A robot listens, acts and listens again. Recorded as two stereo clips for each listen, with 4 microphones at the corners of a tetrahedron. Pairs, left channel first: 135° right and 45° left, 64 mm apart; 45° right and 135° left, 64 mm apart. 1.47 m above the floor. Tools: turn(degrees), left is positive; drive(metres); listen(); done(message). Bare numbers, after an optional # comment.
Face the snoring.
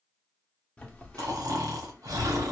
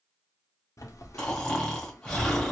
# The snoring: 35° left.
turn(35)
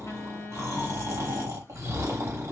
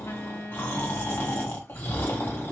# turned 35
# The snoring is now 10° left.
turn(10)
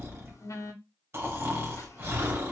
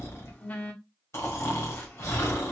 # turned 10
done("Found it: snoring, straight ahead.")